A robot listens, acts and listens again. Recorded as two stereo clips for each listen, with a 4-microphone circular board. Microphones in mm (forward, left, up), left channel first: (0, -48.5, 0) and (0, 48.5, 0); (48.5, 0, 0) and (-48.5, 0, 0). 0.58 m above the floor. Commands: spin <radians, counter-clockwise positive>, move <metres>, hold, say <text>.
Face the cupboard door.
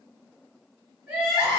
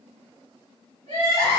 hold
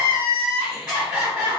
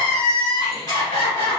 hold
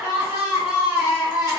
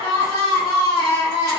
say I can't make out a cupboard door, only crying.